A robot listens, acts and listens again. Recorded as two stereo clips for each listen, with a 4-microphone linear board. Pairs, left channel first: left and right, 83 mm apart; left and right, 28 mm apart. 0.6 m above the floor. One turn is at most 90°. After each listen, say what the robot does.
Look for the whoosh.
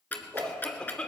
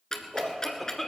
Turn 50° right.
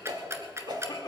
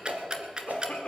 Turn 70° right.
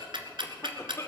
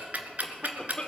Keep listening.
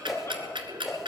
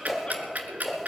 Found it: a whoosh, straight ahead.